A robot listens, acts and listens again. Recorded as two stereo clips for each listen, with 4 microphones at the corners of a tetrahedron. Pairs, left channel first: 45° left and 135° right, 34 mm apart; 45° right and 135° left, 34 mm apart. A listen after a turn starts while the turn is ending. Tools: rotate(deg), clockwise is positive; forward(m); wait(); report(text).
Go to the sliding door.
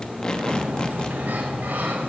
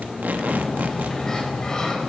rotate(115)
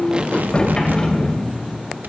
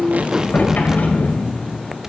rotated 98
rotate(20)
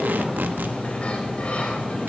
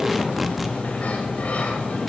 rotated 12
forward(1.0)
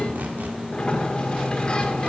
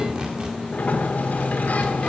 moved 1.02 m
rotate(15)
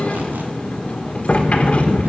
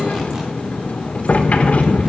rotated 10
forward(1.0)
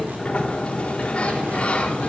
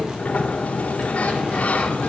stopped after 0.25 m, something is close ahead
report("I am next to the sliding door.")